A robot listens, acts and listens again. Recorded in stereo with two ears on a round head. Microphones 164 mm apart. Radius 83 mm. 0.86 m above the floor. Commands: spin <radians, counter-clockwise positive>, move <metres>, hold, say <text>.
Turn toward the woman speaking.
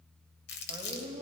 spin -0.26
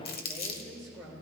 spin 0.52
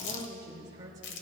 spin -0.35
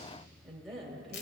say Found it: a woman speaking, straight ahead, 2 to 4 m away.